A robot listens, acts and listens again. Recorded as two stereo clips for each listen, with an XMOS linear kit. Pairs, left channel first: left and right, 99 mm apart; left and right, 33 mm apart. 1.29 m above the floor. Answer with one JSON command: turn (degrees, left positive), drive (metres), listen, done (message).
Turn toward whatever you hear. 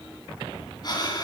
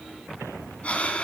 {"turn": 45}
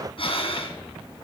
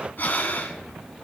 {"turn": 80}
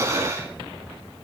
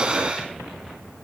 {"turn": -30}
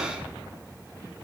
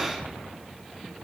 {"listen": true}
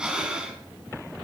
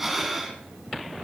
{"turn": -10}
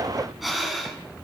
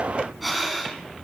{"done": "Found it: breathing, straight ahead."}